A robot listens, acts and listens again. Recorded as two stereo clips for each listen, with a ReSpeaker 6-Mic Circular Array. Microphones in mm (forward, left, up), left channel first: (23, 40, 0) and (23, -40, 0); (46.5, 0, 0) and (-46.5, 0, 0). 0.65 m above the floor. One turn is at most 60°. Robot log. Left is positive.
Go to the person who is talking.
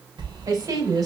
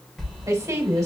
note: The woman speaking: 125° right.
cmd yaw -60
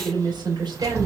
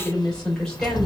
note: The woman speaking is now 80° right.
cmd yaw -60
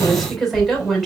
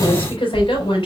cmd fwd 1.0
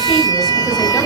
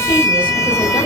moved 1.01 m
cmd idle
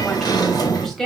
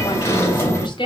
cmd fwd 1.0
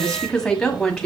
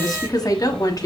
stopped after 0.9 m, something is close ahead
note: The woman speaking is now 15° left.
cmd yaw +15
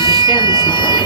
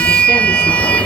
cmd idle
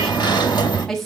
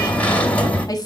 end: I am next to the woman speaking.